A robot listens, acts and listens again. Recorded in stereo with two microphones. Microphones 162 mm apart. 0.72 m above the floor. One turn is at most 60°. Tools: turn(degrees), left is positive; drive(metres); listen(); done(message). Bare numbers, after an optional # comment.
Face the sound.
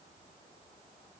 listen()
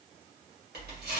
turn(-60)
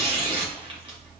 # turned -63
# So it is at 35° right.
turn(-35)
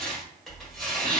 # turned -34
done("Facing the tearing paper, 1 to 2 m away.")